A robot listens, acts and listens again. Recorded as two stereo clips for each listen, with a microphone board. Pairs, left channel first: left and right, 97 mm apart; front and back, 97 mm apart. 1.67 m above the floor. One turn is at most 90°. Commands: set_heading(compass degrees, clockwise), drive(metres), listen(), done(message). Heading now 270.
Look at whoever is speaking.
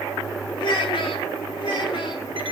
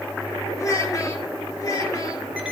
set_heading(215)
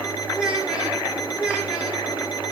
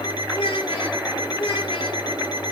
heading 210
set_heading(220)
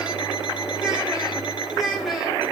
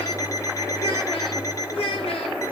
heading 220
done("Found it: a child speaking, straight ahead, over 4 m away.")